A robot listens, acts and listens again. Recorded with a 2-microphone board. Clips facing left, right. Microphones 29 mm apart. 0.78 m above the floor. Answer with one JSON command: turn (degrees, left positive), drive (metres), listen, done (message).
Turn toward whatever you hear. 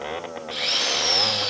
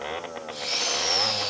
{"turn": 70}
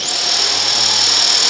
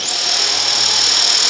{"done": "Found it: a drill, straight ahead."}